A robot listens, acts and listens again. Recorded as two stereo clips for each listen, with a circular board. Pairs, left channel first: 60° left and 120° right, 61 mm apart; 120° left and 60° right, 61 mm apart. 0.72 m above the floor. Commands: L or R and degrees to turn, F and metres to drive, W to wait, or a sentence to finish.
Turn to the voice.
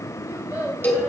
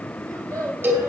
R65
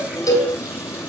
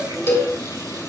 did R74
L10
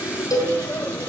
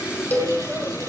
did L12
W
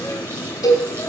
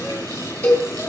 I heard a child speaking from this way, but can't make it out now.